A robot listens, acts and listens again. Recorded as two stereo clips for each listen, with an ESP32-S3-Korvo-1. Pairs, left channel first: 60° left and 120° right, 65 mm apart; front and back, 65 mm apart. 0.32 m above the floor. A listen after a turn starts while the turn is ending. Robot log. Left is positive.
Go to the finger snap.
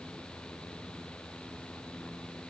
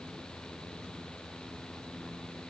cmd idle
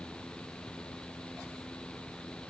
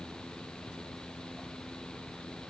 cmd idle
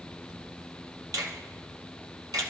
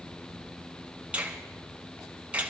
note: The finger snap: 110° right.
cmd yaw -110
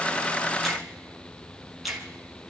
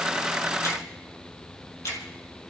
note: The finger snap is now 35° right.
cmd yaw -35
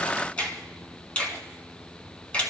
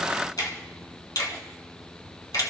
note: The finger snap is now 10° right.
cmd yaw -10
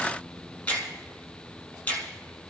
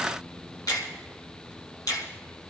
cmd fwd 1.0
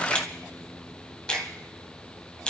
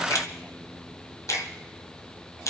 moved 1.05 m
note: The finger snap is now 15° right.
cmd yaw -15
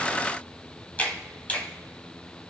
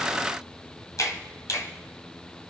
cmd fwd 1.0
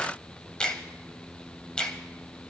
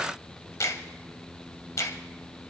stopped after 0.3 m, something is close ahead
note: The finger snap is now 10° right.
cmd yaw -10
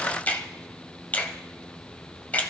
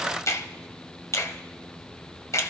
end: Arrived at the finger snap, straight ahead.